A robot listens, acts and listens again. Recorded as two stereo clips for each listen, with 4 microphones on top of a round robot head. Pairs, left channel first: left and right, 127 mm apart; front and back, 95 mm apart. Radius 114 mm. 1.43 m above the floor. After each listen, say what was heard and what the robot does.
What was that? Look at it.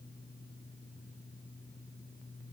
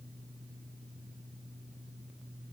Keep listening.
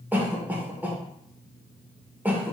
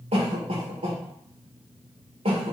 The cough: 165° right. Turn 165° right.
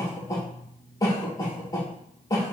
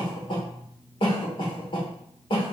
The cough is now 30° left. Turn 30° left.
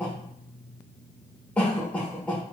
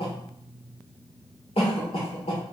The cough is now 10° left. Turn 10° left.
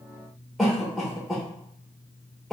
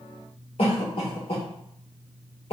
Found it: a cough, straight ahead, 1 to 2 m away.